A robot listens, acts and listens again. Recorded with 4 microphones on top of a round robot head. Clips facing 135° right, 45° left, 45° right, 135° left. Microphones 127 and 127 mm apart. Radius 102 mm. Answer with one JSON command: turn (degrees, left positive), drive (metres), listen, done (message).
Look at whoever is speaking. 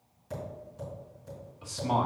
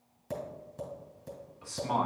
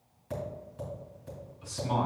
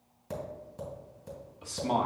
{"turn": 155}
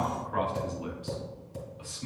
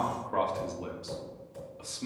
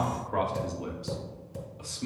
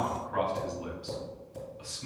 {"done": "Found it: a man speaking, straight ahead, 1 to 2 m away."}